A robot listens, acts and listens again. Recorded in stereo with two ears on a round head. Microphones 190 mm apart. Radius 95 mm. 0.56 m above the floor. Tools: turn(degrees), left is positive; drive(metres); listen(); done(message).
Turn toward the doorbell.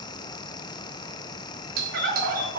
turn(degrees=-45)
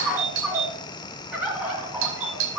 turn(degrees=-80)
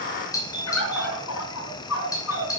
turn(degrees=20)
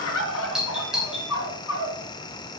done("Facing the doorbell, 2 to 4 m away.")